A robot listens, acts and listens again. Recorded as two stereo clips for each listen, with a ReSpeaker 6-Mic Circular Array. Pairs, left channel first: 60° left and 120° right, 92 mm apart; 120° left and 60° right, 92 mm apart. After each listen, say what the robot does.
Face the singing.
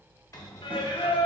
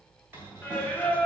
Turn 50° left.
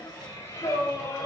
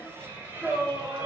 Found it: singing, straight ahead, under 1 m away.